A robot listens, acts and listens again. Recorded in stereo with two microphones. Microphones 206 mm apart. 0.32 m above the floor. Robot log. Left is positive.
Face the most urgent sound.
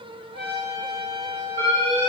note: The alarm: about 25° right or 155° right.
cmd yaw -25
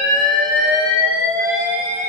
note: So it is at 125° right.
cmd yaw -125
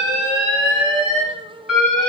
end: Facing the alarm, 1 to 2 m away.